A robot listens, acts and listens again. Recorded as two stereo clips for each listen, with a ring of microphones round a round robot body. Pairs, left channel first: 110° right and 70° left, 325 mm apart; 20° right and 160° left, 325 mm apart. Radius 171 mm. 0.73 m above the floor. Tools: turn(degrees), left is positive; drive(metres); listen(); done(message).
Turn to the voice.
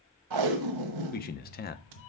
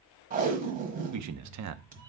turn(degrees=-170)
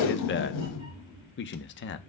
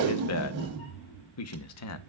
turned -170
turn(degrees=-60)
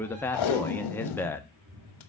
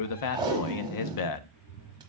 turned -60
turn(degrees=-30)
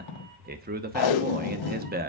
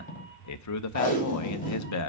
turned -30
turn(degrees=10)
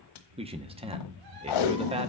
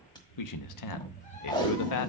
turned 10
done("Found it: a man speaking, straight ahead.")